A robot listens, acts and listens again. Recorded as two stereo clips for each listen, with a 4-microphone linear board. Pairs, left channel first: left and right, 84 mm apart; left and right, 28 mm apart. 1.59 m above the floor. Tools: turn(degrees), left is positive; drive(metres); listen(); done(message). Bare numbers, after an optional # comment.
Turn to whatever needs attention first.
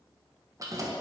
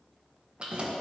listen()
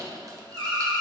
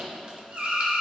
turn(-90)
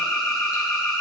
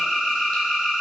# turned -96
done("Found it: an alarm, straight ahead.")